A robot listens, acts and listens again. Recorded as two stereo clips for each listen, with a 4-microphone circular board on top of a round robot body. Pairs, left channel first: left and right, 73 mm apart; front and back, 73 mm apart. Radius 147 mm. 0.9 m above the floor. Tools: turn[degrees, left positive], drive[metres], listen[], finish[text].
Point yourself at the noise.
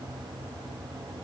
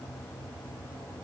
Action: listen[]
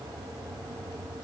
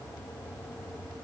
Action: listen[]
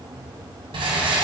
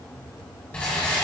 Thought: The rattle: 75° right.
Action: turn[-75]
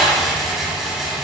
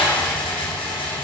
Action: finish[Found it: a rattle, straight ahead, 1 to 2 m away.]